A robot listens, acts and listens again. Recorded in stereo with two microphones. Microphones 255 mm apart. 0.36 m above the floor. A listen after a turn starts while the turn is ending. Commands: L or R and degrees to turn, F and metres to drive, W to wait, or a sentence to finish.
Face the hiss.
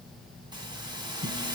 R15
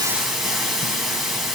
Facing the hiss.